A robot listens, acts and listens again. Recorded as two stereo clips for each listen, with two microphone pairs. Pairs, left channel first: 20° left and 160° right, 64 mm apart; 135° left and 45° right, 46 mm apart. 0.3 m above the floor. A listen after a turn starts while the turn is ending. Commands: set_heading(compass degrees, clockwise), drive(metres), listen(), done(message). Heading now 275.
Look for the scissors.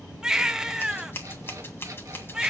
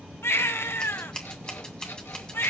set_heading(210)
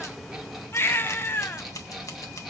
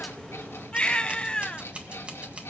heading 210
set_heading(195)
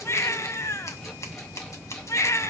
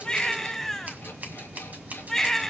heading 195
done("Facing the scissors.")